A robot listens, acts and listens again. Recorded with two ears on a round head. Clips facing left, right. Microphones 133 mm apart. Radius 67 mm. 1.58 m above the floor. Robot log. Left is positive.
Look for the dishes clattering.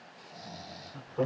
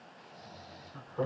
cmd idle
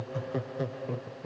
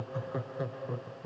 cmd idle
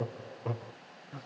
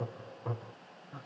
end: I can't make out dishes clattering, only snoring and laughter.